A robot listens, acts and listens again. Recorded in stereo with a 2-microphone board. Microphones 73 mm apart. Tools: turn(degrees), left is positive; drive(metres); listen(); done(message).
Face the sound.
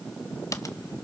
turn(degrees=45)
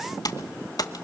turn(degrees=80)
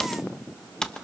turn(degrees=10)
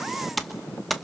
done("Facing the typing on a keyboard.")